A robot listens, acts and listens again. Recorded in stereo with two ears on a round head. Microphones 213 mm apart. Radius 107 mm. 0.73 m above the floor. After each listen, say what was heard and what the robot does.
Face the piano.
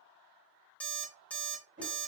Keep listening.
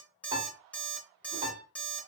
The piano: about 20° right or 160° right. Turn 20° right.
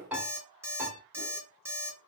Found it: a piano, straight ahead.